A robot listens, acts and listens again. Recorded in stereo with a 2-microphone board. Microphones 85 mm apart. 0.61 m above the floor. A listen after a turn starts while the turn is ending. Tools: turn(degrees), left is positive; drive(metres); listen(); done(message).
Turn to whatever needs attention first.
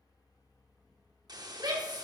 turn(degrees=-60)
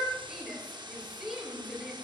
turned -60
done("Found it: a shout, straight ahead, 2 to 4 m away.")